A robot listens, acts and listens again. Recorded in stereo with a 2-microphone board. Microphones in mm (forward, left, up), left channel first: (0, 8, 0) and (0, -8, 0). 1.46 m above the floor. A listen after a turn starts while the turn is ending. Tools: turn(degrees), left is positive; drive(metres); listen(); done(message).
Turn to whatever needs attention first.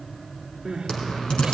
turn(degrees=-65)
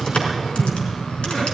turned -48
listen()
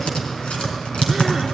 listen()
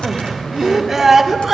turn(degrees=-20)
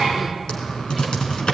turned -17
listen()
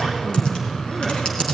listen()
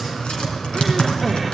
done("Facing where the crying came from. I can't hear it now.")